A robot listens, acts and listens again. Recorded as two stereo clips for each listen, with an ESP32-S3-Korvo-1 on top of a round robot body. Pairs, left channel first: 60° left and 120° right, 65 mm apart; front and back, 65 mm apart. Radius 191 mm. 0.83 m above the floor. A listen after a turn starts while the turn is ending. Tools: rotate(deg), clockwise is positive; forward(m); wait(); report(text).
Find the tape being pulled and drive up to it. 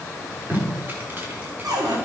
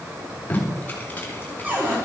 rotate(65)
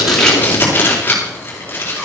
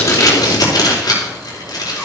forward(1.0)
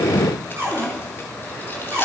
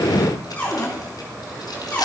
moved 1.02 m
wait()
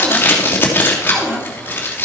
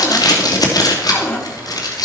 forward(1.0)
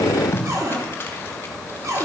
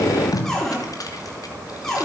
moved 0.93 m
forward(1.0)
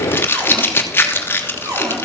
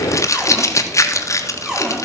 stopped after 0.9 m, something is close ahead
rotate(-10)
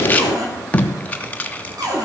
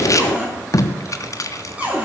report("I am next to the tape being pulled.")